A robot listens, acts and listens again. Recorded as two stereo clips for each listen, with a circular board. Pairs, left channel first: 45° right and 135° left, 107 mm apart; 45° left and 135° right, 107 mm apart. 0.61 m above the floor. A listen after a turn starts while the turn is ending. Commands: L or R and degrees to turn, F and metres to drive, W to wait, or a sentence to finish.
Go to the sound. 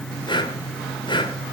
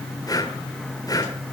F1.0
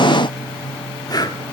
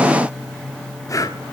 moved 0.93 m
F1.0
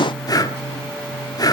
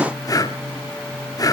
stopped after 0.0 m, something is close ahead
Arrived at the breathing, straight ahead.